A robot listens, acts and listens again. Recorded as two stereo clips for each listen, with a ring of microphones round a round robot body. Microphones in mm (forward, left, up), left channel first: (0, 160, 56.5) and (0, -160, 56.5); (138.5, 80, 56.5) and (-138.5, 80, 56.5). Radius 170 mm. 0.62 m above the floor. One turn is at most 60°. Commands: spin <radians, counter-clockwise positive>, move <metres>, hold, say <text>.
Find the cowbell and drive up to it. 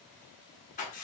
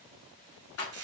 hold
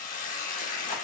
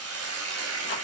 hold
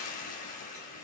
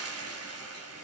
say I can't make out a cowbell to turn to.